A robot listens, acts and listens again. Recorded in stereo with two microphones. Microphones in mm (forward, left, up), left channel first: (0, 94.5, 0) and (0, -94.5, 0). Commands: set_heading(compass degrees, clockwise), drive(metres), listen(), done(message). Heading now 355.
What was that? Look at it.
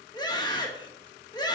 set_heading(335)
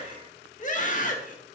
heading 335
set_heading(200)
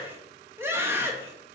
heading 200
set_heading(215)
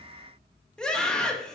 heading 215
done("Facing the scream, 2 to 4 m away.")